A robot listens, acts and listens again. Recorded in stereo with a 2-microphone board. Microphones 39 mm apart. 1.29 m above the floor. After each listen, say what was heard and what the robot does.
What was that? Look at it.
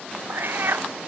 The cat meowing: about 60° right or 120° right. Turn 60° right.
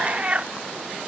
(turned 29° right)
So it is at 30° right. Turn 30° right.
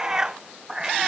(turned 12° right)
The cat meowing is now 15° right. Turn 15° right.
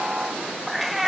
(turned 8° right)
Found it: a cat meowing, straight ahead.